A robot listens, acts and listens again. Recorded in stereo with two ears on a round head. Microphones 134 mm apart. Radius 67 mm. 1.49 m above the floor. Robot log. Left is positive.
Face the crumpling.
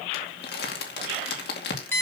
cmd yaw +90
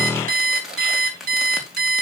end: Found it: crumpling, straight ahead, 2 to 4 m away.